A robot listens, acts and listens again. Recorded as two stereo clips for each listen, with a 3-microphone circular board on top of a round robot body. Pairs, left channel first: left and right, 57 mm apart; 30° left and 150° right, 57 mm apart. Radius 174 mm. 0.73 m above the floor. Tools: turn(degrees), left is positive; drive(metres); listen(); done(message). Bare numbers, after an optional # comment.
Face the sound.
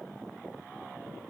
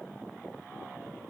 listen()
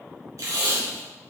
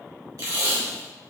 # The tape being pulled: 125° right.
turn(-125)
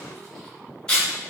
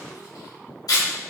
# The tape being pulled is now 10° left.
turn(10)
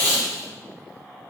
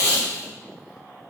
done("Found it: tape being pulled, straight ahead.")